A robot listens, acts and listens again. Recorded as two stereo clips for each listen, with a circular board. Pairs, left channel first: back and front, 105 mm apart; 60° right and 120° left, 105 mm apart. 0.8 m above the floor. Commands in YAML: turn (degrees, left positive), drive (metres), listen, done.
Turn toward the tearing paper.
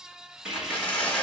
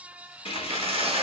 turn: 105
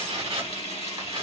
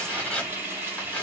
turn: 15
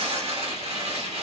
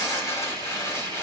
done: "Facing the tearing paper."